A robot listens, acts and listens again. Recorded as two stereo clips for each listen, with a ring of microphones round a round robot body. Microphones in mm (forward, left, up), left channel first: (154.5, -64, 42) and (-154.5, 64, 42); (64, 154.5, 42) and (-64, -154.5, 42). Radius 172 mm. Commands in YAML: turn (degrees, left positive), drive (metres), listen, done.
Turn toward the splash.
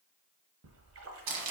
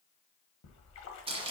turn: 110
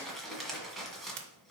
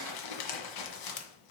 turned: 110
done: "Facing where the splash came from. I can't hear it now."